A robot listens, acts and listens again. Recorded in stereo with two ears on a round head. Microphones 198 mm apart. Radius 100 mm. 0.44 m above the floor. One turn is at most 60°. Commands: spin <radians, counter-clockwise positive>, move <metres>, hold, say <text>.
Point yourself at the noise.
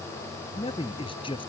spin 0.44
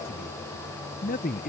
spin 1.05
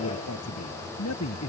spin 1.05
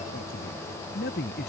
spin 0.79
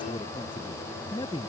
spin 0.35
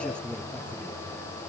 say Facing the man speaking.